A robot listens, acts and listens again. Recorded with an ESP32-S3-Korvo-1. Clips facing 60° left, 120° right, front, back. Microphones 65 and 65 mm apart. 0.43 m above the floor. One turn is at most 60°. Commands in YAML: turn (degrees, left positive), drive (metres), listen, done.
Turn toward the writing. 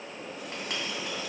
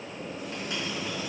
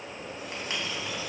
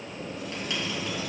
turn: 55
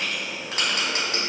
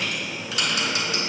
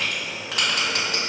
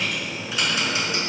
turn: 15
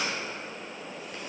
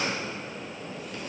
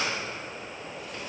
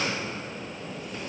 listen: true
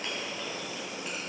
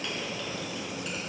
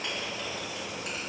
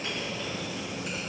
done: "Facing the writing, 2 to 4 m away."